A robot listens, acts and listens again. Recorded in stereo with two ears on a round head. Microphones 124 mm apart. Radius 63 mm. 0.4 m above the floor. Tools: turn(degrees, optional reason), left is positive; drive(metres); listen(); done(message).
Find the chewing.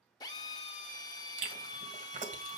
turn(degrees=-55, reason="The chewing: about 55° right or 125° right.")
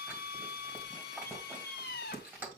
turn(degrees=-15, reason="So it is at 15° right.")
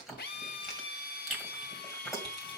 done("Facing the chewing.")